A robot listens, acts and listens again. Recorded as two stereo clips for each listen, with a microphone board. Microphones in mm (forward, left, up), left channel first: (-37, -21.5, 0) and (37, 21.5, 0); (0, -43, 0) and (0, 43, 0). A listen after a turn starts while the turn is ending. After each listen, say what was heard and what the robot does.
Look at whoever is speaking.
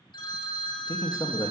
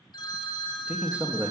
The man speaking: 160° left. Turn 160° left.
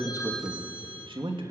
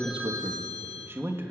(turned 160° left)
The man speaking is now 30° left. Turn 30° left.
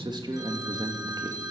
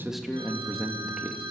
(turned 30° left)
Found it: a man speaking, straight ahead, 2 to 4 m away.